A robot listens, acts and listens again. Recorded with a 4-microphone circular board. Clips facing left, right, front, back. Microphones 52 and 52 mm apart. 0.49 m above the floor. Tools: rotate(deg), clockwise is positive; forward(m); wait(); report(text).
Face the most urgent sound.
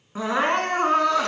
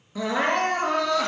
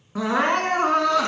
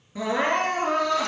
rotate(-35)
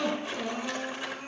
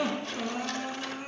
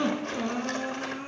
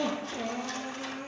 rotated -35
rotate(10)
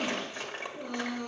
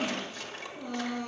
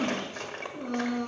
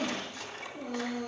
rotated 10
report("Found it: crying, straight ahead, 2 to 4 m away.")